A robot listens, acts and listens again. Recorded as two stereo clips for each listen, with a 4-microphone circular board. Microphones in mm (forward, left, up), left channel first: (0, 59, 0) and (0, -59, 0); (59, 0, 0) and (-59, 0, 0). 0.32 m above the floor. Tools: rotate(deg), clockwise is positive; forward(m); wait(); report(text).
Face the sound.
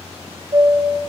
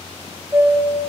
rotate(115)
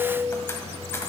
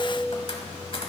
wait()
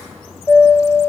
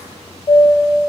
rotate(-25)
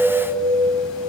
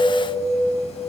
rotate(-10)
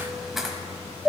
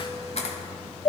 report("Found it: a chime, straight ahead.")